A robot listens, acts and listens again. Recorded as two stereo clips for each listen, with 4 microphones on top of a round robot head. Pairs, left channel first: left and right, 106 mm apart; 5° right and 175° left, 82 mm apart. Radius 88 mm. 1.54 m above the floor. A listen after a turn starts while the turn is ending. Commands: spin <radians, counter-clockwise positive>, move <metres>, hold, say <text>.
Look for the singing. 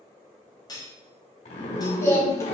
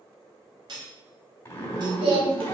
spin 2.71
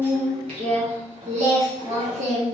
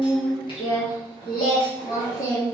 spin -1.22
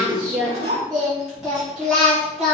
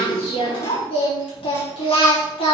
say Found it: singing, straight ahead.